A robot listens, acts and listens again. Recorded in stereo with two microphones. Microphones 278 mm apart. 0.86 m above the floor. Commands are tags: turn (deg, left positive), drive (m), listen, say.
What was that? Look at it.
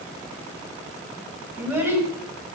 <turn deg="-30"/>
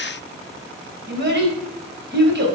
<turn deg="-140"/>
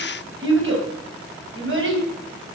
<turn deg="-45"/>
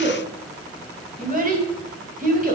<turn deg="-30"/>
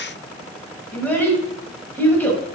<say>Found it: a child speaking, straight ahead.</say>